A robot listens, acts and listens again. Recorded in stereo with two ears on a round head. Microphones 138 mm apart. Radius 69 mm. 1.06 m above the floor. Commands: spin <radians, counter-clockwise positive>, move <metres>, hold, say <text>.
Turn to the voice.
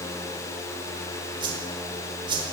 hold
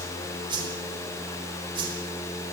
hold
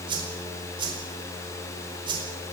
say I can't make out anyone speaking, only a whoosh.